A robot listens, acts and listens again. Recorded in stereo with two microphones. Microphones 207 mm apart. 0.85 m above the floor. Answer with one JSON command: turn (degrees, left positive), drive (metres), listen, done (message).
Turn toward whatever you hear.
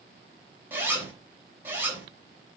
{"turn": -30}
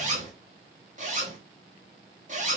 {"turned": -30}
{"turn": -145}
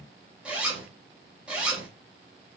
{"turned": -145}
{"done": "Found it: a zipper, straight ahead, 2 to 4 m away."}